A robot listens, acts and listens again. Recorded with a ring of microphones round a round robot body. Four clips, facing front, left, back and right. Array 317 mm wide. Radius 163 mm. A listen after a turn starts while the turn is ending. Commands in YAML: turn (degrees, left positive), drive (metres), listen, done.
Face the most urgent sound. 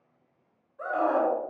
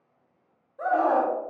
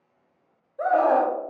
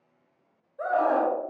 turn: 180
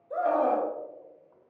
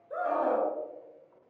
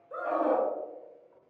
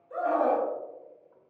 turn: -45
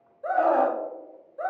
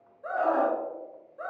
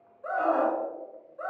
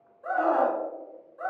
done: "Found it: a scream, straight ahead, 2 to 4 m away."